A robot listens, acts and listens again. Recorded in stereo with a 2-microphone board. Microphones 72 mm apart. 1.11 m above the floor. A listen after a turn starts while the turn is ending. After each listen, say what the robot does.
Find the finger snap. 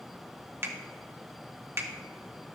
Turn 35° right.
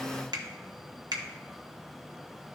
Turn 105° right.
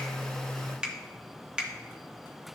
Turn 15° right.
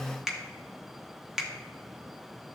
Facing the finger snap.